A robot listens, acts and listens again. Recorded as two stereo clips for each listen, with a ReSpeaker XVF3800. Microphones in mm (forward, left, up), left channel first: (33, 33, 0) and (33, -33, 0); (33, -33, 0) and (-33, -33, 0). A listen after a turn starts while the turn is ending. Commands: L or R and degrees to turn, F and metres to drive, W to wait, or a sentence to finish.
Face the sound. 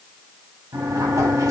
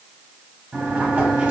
R115
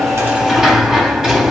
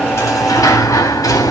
R10
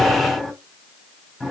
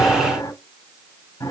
Facing the sliding door.